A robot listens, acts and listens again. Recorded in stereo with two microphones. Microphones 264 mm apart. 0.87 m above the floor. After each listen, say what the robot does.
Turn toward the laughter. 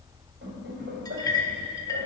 Turn 45° right.
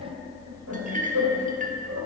Turn 105° right.
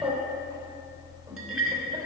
Turn 10° right.
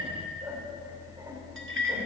Keep listening.
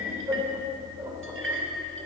Turn 10° right.
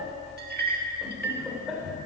Found it: laughter, straight ahead, 2 to 4 m away.